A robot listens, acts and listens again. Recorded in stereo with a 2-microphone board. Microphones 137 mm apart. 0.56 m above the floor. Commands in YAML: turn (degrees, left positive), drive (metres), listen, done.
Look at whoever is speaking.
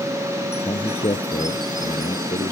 turn: 40
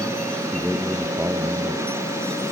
done: "Found it: a man speaking, straight ahead."